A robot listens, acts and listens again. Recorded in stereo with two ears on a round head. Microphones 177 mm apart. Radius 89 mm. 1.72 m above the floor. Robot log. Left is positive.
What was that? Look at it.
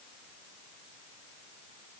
cmd idle
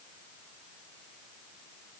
cmd idle
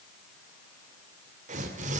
note: The tearing paper: about 45° right or 135° right.
cmd yaw -45
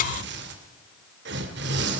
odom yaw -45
note: So it is at 90° right.
cmd yaw -90
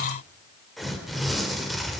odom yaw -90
end: Found it: tearing paper, straight ahead, 2 to 4 m away.